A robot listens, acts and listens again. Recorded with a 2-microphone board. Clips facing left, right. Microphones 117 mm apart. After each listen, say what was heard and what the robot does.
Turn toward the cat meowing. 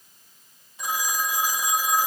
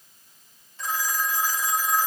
Keep listening.
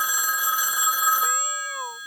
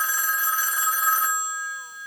Turn 90° left.
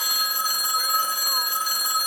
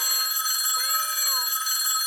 Keep listening.
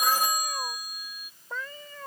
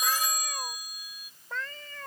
The cat meowing is now 10° left. Turn 10° left.
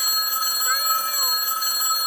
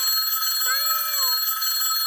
Keep listening.
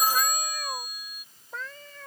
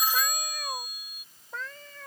Facing the cat meowing.